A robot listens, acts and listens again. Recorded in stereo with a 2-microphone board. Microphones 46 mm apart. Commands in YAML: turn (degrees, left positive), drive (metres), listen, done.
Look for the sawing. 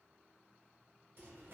listen: true
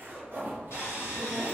turn: 90
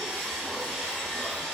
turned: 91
done: "Facing the sawing, 1 to 2 m away."